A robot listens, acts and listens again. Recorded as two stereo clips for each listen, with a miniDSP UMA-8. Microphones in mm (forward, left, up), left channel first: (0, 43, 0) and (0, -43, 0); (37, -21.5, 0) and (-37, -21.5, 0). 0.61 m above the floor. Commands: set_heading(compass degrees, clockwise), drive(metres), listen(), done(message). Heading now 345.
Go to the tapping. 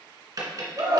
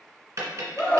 set_heading(120)
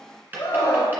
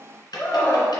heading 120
set_heading(140)
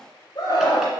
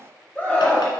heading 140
listen()
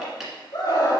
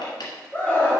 drive(1.0)
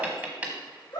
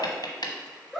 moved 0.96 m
set_heading(155)
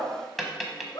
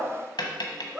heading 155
drive(1.0)
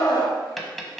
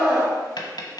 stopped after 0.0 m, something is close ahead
done("Arrived at the tapping, straight ahead.")